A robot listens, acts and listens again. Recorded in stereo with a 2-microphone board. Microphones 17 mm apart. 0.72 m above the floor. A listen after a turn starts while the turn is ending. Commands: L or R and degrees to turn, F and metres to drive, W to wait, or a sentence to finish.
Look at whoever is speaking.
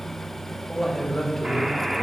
L20
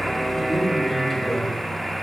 W
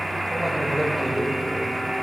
L30
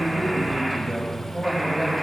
L20
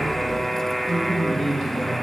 L140
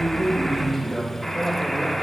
R20
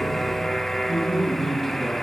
Found it: a man speaking, straight ahead, 2 to 4 m away.